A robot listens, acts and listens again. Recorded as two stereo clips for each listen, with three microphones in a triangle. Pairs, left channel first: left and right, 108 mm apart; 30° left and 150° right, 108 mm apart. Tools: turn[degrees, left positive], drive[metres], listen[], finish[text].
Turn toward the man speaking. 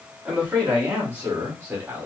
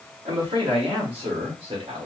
Thought: The man speaking: 160° right.
Action: turn[-160]
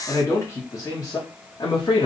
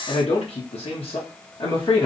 Thought: The man speaking is now 60° left.
Action: turn[60]
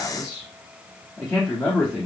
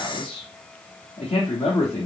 Thought: The man speaking is now 15° left.
Action: turn[15]
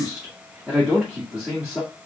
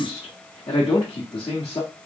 Action: finish[Facing the man speaking.]